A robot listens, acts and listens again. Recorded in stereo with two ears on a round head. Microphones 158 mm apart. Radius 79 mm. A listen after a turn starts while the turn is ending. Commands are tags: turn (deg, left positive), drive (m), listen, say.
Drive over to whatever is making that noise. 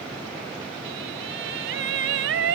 <turn deg="-90"/>
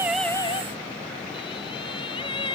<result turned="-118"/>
<turn deg="30"/>
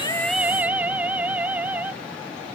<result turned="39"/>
<turn deg="-10"/>
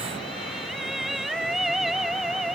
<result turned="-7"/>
<drive m="1.0"/>
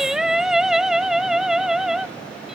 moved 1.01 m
<drive m="1.0"/>
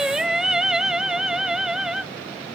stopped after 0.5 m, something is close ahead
<say>I am next to the singing.</say>